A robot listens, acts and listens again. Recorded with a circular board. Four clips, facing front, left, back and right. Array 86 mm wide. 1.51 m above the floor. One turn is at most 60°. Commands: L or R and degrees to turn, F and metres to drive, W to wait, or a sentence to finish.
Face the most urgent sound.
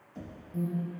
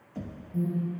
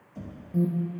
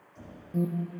R60
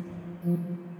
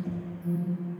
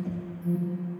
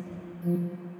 R50
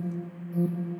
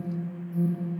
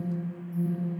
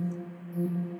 Facing the alarm, 1 to 2 m away.